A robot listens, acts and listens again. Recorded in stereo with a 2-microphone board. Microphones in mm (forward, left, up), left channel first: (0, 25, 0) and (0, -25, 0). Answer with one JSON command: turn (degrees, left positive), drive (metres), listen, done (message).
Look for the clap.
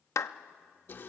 {"turn": 75}
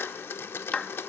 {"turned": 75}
{"turn": 25}
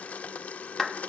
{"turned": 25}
{"done": "Facing the clap, under 1 m away."}